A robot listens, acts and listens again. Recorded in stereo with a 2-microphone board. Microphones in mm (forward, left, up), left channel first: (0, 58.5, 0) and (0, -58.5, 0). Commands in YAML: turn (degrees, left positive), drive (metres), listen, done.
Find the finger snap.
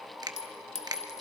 turn: -35
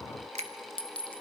listen: true
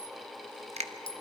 turn: -110
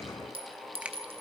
turn: -10
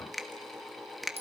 done: "Facing the finger snap, 1 to 2 m away."